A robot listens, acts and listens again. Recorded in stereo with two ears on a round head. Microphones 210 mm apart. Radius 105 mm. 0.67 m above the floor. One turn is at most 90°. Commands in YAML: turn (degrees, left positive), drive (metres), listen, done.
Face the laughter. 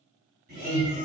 turn: -50
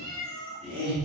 turn: -30
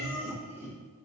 turn: -15
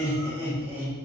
turn: -10
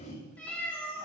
done: "Facing the laughter, 2 to 4 m away."